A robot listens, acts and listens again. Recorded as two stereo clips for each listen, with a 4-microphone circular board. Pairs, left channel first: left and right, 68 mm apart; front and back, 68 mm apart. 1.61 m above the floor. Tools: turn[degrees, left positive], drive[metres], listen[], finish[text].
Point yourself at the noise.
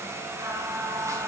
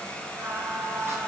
Thought: The singing: 130° right.
Action: turn[-130]
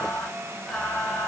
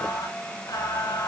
Thought: The singing is now 10° left.
Action: turn[10]
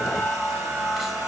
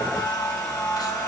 Action: finish[Found it: singing, straight ahead.]